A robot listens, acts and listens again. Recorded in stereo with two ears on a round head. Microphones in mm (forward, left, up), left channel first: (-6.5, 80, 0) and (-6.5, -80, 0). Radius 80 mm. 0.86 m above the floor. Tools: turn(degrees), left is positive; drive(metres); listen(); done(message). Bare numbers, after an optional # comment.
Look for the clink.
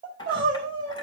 # The clink: about 25° left or 155° left.
turn(25)
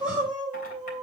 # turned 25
listen()
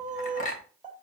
# So it is at 130° left.
turn(130)
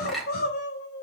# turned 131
done("Found it: a clink, straight ahead, 2 to 4 m away.")